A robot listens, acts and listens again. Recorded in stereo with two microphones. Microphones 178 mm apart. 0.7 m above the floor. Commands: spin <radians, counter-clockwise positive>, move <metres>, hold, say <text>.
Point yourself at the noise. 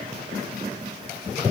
hold
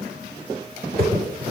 spin -0.96
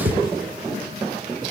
spin -1.05
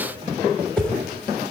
say Facing the whoosh, under 1 m away.